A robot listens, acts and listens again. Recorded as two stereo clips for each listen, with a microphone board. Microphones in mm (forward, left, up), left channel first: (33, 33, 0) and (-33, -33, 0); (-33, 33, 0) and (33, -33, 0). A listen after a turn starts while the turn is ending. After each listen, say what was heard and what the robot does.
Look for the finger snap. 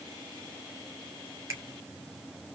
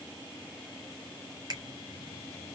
The finger snap: 85° right. Turn 85° right.
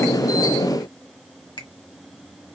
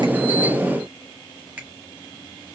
The finger snap is now 25° left. Turn 25° left.
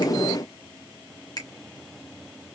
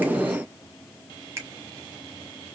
Found it: a finger snap, straight ahead, 1 to 2 m away.